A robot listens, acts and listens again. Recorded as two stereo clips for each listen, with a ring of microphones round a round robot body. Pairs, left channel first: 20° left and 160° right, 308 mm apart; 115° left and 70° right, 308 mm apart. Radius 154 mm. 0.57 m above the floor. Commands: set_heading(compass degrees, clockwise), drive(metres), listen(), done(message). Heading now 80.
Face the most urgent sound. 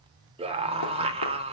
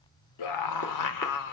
set_heading(310)
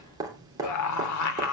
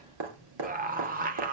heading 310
done("Facing the scream.")